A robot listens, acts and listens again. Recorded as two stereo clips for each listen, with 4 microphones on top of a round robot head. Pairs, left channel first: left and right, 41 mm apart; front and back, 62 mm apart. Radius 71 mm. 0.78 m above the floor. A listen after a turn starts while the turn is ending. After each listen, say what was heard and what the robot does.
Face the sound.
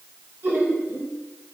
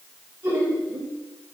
The laughter: 125° right. Turn 125° right.
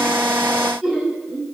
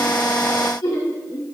The laughter is now 10° right. Turn 10° right.
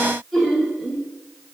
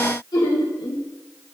Found it: laughter, straight ahead.